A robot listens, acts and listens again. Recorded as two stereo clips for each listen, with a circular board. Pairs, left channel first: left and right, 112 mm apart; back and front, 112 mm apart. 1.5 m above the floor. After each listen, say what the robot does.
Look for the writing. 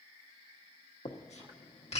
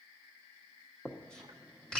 Turn 100° left.
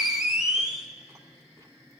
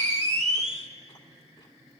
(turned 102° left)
Found it: writing, straight ahead, 1 to 2 m away.